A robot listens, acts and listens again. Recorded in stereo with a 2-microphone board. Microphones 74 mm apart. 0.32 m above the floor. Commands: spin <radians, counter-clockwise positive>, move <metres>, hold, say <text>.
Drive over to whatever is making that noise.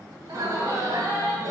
spin -1.05
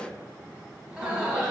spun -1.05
spin -0.26
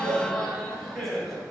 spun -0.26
move 1.0
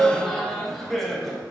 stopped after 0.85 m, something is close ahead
say Arrived at the laughter, straight ahead.